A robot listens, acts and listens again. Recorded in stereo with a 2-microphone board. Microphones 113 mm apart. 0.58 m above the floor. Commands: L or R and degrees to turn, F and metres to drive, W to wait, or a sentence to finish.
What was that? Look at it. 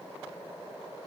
W
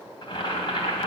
L45
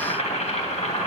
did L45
L90
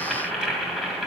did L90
Found it: boiling, straight ahead.